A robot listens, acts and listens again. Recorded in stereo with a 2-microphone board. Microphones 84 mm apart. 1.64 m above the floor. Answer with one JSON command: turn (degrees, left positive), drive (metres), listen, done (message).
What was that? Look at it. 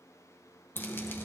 {"turn": 25}
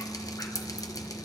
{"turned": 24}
{"turn": 125}
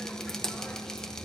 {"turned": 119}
{"done": "Found it: dripping, straight ahead."}